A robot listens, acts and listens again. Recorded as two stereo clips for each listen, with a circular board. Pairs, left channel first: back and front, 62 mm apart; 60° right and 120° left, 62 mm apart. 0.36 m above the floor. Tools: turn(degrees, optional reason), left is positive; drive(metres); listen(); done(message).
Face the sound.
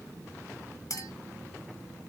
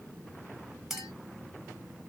turn(degrees=-160, reason="The clink: 160° right.")
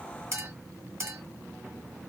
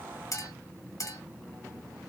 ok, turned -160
turn(degrees=-35, reason="The clink is now 35° right.")
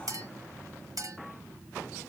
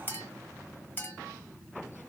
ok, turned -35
turn(degrees=-10, reason="The clink is now 10° right.")
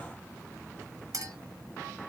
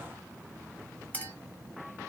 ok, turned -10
done("Found it: a clink, straight ahead.")